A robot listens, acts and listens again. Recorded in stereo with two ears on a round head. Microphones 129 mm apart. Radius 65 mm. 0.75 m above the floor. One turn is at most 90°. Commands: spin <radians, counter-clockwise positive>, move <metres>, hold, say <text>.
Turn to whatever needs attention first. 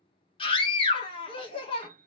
spin 0.61
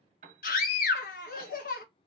spin 1.57
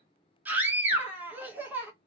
spin -0.26
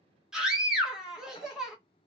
say Found it: a scream, straight ahead.